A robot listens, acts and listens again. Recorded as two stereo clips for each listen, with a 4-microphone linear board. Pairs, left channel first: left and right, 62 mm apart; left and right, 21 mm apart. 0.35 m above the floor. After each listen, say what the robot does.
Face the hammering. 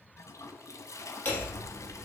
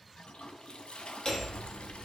Turn 30° left.
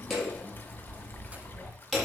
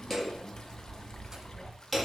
Facing the hammering, over 4 m away.